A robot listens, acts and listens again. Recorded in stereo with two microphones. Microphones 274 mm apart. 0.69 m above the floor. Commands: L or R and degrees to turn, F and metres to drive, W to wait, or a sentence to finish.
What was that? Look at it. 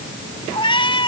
L20
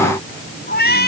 L140
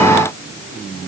W
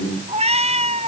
R25
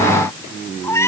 L10
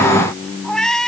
Facing the cat meowing.